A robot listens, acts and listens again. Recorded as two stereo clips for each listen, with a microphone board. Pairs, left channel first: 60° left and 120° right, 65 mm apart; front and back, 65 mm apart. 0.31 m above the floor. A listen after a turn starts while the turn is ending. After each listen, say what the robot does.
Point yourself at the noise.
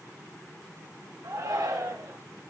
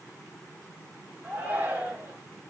Turn 120° right.
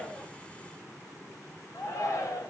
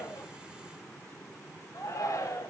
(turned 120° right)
Turn 25° left.
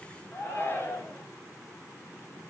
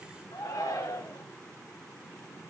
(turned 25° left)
Facing the shout.